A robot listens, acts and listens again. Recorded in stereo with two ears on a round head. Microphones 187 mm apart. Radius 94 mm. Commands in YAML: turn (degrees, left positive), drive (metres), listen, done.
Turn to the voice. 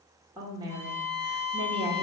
turn: -20
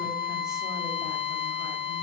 listen: true
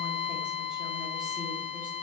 listen: true
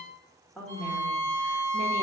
done: "Facing the woman speaking, 1 to 2 m away."